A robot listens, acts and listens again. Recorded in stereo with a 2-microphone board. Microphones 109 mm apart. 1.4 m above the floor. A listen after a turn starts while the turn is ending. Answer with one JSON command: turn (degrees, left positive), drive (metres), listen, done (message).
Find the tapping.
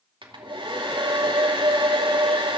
{"listen": true}
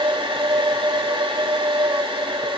{"listen": true}
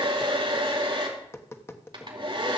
{"turn": 20}
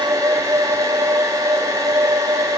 {"listen": true}
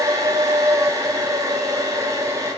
{"listen": true}
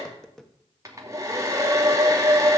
{"done": "Facing the tapping."}